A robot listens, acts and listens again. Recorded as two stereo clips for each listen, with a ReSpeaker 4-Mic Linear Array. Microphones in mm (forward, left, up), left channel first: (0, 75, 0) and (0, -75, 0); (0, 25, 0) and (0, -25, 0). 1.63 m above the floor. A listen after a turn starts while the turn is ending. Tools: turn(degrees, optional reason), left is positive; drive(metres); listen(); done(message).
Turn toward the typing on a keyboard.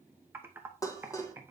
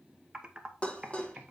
turn(degrees=-15, reason="The typing on a keyboard: about 15° right or 165° right.")
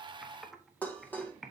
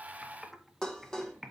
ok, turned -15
done("Facing the typing on a keyboard.")